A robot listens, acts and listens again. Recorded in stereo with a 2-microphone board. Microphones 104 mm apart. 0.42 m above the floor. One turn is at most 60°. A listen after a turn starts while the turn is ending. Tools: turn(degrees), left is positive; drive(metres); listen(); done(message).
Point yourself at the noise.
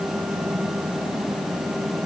listen()
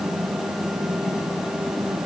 listen()
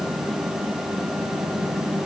done("I can't make out anything to turn to.")